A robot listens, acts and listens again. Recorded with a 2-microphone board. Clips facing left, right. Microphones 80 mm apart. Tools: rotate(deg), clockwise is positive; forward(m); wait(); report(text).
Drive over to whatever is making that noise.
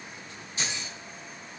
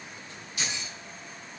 rotate(-30)
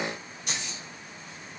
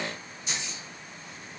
rotate(-115)
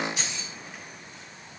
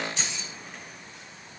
rotate(-10)
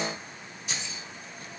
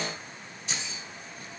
forward(1.0)
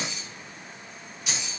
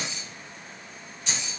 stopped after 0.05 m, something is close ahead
rotate(-10)
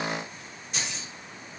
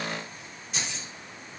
report("Blocked. The keys jangling is further on, straight ahead.")